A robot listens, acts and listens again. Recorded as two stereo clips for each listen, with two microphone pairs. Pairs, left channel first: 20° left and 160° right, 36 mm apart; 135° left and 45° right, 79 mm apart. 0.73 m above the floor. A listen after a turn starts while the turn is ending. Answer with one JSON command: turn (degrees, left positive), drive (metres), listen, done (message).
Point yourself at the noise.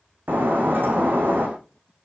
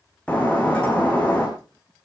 {"turn": -150}
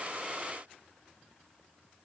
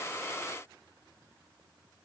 {"done": "Facing where the breaking glass came from. I can't hear it now."}